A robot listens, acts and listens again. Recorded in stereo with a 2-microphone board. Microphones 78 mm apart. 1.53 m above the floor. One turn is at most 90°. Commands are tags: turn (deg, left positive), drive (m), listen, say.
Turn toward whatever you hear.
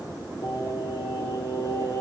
<turn deg="55"/>
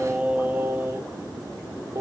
<turn deg="-50"/>
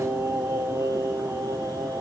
<turn deg="-45"/>
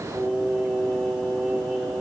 <say>Found it: singing, straight ahead.</say>